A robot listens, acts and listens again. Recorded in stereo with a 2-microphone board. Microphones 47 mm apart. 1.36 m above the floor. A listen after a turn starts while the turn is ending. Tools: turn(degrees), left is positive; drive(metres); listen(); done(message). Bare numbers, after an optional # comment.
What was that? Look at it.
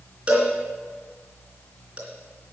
# The cowbell: about 25° right or 155° right.
turn(-25)
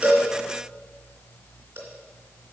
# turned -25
listen()
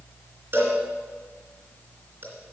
# So it is at 125° right.
turn(-125)
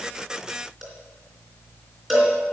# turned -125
# The cowbell is now 10° right.
turn(-10)
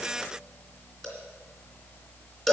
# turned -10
done("Facing the cowbell, 2 to 4 m away.")